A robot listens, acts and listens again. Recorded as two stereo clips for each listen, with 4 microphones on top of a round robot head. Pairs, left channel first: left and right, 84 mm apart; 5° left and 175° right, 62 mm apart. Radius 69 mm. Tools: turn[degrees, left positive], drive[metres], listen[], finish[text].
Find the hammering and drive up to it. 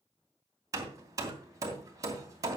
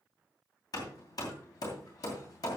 Thought: The hammering: 40° right.
Action: turn[-40]
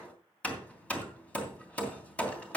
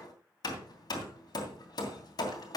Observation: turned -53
Thought: The hammering is now 15° left.
Action: turn[15]
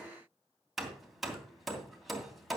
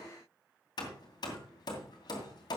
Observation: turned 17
Action: drive[1.0]
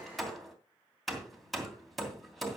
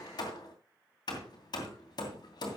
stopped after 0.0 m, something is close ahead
Action: finish[Blocked. The hammering is further on, straight ahead.]